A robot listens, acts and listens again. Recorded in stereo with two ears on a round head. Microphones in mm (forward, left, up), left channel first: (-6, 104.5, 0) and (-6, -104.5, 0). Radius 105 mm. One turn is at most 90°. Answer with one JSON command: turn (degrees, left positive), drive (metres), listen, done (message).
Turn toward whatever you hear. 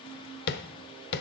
{"turn": 45}
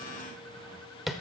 {"done": "Facing the tapping, under 1 m away."}